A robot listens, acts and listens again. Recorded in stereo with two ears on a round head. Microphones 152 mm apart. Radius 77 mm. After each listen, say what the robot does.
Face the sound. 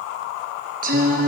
Turn 50° right.
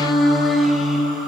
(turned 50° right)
Facing the singing, over 4 m away.